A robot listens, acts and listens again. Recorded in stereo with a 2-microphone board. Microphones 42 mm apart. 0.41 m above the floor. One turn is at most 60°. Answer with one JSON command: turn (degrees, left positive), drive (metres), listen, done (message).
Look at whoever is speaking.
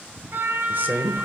{"turn": -45}
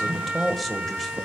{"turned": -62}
{"done": "Found it: a man speaking, straight ahead."}